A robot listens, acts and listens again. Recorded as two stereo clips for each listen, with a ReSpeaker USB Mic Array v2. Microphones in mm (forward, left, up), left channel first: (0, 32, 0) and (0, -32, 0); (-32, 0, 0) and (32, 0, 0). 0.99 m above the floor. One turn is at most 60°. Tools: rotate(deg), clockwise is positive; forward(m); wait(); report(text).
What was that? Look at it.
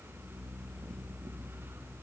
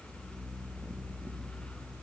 wait()
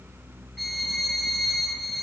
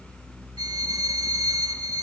report("Facing the violin, 2 to 4 m away.")